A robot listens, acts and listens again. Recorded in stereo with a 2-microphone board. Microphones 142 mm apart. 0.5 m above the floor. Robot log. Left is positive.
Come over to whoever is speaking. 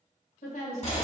note: The woman speaking: about 65° left or 115° left.
cmd yaw +65
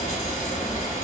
cmd idle
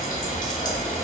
cmd idle
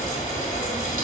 end: I heard a woman speaking, but can't make it out now. It was about straight ahead or 50° left. I did not reach it.